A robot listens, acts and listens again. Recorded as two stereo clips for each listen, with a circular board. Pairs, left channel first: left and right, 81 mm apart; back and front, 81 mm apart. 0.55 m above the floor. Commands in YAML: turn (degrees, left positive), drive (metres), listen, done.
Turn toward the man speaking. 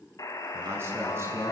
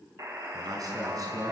turn: -35
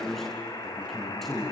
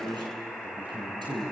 done: "Facing the man speaking."